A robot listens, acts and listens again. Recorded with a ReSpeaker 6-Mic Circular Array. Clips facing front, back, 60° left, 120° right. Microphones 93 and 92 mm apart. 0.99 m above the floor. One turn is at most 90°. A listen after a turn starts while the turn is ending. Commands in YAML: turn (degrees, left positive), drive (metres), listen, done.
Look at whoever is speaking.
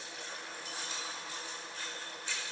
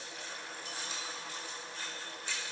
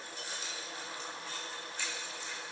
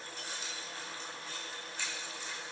listen: true
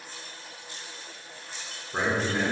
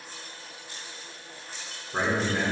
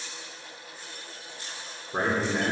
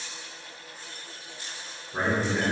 turn: 85
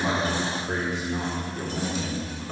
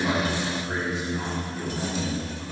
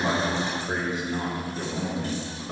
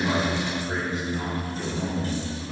turn: 25
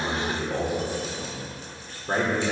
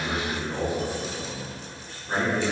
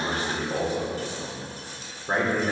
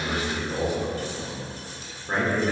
done: "Facing the man speaking, 2 to 4 m away."